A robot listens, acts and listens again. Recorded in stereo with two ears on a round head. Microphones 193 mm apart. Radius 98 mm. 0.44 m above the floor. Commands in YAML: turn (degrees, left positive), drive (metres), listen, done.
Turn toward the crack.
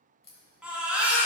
turn: 30
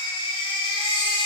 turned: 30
listen: true
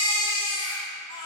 done: "I heard a crack, but can't make it out now. It was about straight ahead or 120° left."